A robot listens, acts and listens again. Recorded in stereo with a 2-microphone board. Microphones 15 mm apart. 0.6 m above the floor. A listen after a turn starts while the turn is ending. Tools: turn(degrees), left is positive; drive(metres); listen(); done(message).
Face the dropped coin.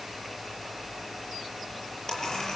turn(degrees=30)
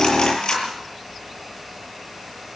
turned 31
turn(degrees=115)
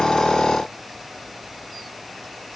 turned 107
turn(degrees=10)
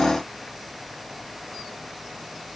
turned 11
done("Facing where the dropped coin came from. I can't hear it now.")